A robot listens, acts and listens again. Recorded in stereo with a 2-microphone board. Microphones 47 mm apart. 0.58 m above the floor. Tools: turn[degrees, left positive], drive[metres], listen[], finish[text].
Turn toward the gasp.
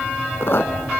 Action: listen[]
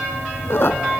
Action: listen[]
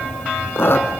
Action: finish[I can't make out a gasp, only a squeak.]